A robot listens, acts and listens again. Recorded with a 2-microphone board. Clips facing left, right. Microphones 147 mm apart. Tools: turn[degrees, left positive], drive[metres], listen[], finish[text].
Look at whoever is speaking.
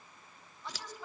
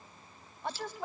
Thought: The woman speaking: about 55° right or 125° right.
Action: turn[-55]
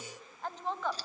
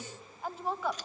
Action: finish[Found it: a woman speaking, straight ahead.]